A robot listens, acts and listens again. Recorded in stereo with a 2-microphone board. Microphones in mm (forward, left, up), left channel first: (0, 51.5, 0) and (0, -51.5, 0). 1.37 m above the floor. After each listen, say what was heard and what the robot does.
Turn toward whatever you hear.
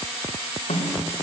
Turn 90° left.
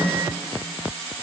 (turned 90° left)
Found it: a snare drum, straight ahead.